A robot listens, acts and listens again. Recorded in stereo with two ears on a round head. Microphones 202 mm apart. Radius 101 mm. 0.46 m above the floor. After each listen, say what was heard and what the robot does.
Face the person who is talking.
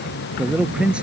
Turn 30° right.
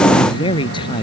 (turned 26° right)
So it is at 20° left. Turn 20° left.
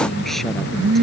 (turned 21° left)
Keep listening.
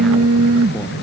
Keep listening.
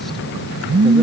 I heard a man speaking from this way, but can't make it out now.